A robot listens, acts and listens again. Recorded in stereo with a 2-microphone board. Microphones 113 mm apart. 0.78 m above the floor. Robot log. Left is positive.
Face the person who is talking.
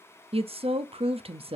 note: The woman speaking: about 60° right or 120° right.
cmd yaw -60
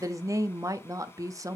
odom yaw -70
note: So it is at 35° right.
cmd yaw -35
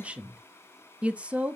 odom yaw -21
note: The woman speaking is now 15° right.
cmd yaw -15
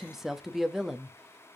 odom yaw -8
end: Found it: a woman speaking, straight ahead, under 1 m away.